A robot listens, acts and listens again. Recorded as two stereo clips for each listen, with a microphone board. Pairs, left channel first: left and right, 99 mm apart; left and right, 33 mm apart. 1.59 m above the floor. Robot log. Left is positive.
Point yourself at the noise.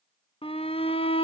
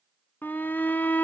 cmd yaw +90
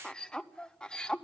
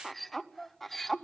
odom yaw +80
note: So it is at 10° left.
cmd yaw +10
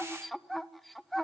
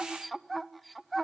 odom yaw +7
end: Facing the shout, under 1 m away.